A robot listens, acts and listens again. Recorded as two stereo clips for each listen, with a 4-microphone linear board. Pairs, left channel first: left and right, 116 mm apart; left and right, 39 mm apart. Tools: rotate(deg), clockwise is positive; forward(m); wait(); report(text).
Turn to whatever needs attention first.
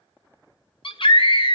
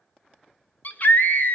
rotate(-45)
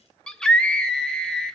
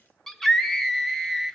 report("Found it: a scream, straight ahead.")